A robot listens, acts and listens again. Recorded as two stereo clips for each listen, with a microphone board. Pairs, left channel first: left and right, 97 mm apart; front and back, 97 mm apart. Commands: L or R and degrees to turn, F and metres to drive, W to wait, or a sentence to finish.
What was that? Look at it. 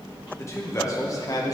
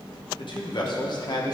L40
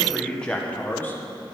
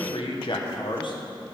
L25
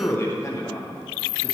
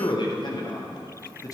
L40
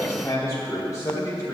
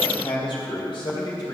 L40
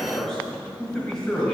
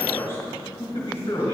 L10
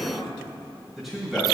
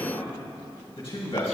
Found it: a man speaking, straight ahead.